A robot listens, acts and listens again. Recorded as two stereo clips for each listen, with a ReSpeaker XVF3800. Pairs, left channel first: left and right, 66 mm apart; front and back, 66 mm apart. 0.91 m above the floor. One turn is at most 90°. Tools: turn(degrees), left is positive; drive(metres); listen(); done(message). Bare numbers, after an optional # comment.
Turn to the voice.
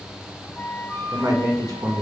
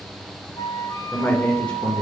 # The man speaking: 70° right.
turn(-70)
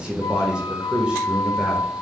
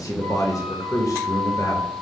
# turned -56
# The man speaking is now 15° right.
turn(-15)
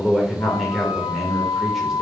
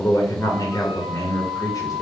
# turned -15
done("Found it: a man speaking, straight ahead.")